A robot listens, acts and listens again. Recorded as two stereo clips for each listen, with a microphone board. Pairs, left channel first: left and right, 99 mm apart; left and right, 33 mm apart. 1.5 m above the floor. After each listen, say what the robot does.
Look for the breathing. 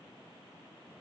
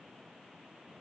Keep listening.
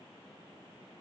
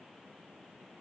Keep listening.
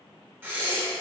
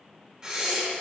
Turn 20° right.
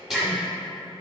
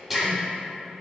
Facing the breathing, under 1 m away.